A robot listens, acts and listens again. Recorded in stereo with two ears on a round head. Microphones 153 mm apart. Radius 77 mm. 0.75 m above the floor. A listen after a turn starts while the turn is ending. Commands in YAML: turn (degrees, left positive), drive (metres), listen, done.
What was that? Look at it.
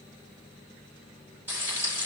turn: -30
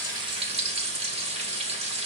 turn: -140
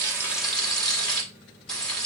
done: "Found it: frying, straight ahead."